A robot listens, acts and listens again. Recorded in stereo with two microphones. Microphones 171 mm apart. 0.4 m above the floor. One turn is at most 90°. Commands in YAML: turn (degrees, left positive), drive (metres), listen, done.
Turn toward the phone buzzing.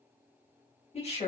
listen: true
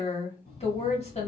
turn: 65
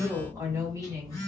turn: 20
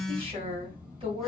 done: "Facing the phone buzzing, 1 to 2 m away."